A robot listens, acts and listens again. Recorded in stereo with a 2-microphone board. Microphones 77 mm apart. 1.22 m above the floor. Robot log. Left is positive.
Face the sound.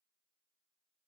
cmd idle
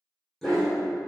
cmd yaw +30
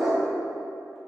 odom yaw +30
cmd yaw -30
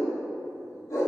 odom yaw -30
note: So it is at 55° left.
cmd yaw +55
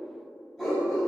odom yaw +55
note: The dog barking is now 10° left.
cmd yaw +10
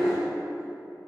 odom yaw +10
end: Facing the dog barking.